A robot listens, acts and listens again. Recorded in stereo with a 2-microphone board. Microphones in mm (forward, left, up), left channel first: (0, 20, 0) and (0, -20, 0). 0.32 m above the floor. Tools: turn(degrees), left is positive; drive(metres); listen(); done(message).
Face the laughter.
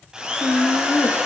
turn(degrees=65)
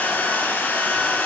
listen()
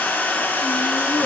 listen()
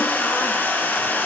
done("I heard laughter, but can't make it out now. It was about straight ahead or 50° left.")